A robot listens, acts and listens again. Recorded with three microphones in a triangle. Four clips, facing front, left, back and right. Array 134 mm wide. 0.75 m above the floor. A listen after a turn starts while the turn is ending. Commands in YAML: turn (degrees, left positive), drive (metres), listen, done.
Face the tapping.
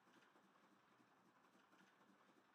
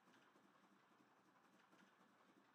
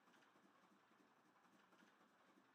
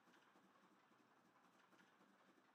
listen: true
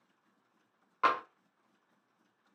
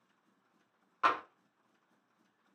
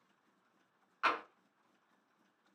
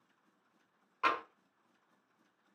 turn: 10
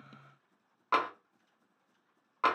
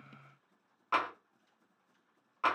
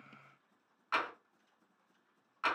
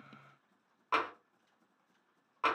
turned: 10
done: "Found it: tapping, straight ahead."